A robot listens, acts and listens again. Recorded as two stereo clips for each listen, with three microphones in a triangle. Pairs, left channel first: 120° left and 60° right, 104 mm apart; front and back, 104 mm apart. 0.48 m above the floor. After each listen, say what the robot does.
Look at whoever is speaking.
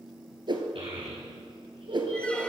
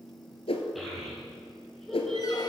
Turn 85° right.
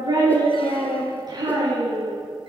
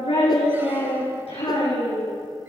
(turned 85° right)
Turn 10° right.
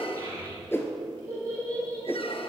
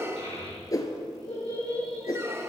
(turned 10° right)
Facing the child speaking, over 4 m away.